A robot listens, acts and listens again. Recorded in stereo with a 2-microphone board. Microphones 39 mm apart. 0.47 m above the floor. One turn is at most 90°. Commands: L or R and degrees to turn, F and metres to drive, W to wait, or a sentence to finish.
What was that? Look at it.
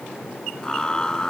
L20
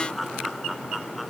Found it: laughter, straight ahead.